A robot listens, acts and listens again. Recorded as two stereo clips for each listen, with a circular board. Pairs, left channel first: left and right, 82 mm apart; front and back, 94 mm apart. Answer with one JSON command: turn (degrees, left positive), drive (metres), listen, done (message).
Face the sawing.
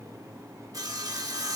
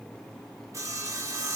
{"turn": -125}
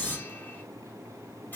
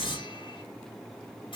{"turn": 25}
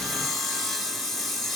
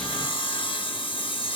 {"done": "Facing the sawing."}